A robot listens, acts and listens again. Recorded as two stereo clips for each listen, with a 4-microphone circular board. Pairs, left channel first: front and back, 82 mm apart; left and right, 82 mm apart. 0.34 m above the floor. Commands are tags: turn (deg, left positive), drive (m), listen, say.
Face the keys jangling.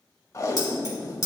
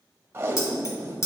<turn deg="45"/>
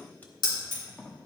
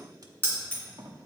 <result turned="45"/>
<turn deg="15"/>
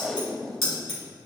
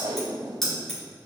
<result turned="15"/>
<say>Facing the keys jangling.</say>